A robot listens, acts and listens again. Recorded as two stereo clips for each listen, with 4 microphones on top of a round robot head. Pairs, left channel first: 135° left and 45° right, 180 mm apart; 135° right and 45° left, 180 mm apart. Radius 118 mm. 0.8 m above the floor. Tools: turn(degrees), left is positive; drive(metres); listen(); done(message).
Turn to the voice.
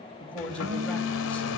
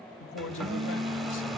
turn(degrees=-140)
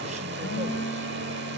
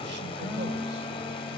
listen()
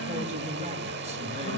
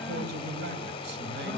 turn(degrees=15)
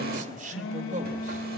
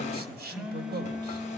done("Found it: a man speaking, straight ahead, over 4 m away.")